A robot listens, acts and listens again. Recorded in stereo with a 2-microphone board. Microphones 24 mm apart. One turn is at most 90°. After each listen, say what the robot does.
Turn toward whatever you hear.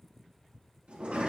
Turn 55° right.
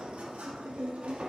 Turn 65° right.
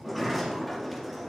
Facing the sliding door, 1 to 2 m away.